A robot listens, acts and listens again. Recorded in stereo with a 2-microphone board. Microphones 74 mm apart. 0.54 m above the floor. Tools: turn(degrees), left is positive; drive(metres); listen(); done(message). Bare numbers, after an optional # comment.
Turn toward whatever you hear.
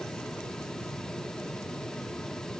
listen()
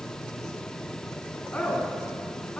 # The woman speaking: about 20° left or 160° left.
turn(20)
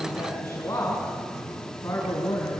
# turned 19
# So it is at 140° left.
turn(140)
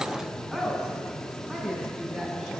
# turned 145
done("Found it: a woman speaking, straight ahead, over 4 m away.")